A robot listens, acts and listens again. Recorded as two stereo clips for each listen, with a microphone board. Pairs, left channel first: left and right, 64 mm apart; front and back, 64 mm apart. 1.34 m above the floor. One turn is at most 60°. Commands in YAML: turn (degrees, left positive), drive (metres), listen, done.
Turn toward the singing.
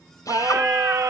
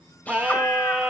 turn: -60
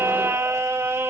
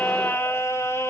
turn: -40
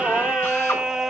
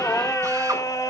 turn: -10
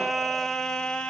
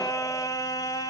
turn: 15
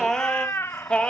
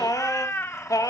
turn: 20
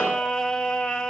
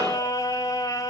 turn: 15
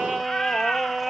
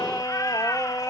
done: "Facing the singing."